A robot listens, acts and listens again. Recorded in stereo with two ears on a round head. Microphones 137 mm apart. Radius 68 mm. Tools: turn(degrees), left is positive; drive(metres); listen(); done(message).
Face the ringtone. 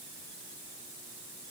listen()
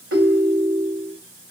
turn(degrees=-90)
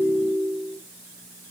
done("Facing the ringtone.")